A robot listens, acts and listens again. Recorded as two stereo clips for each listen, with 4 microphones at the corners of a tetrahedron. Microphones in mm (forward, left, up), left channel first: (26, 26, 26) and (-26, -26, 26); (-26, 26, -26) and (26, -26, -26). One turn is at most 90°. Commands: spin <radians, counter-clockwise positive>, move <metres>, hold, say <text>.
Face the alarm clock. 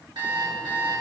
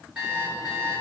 spin -1.57
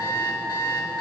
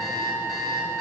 spin -0.17
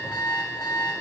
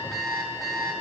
say Facing the alarm clock, over 4 m away.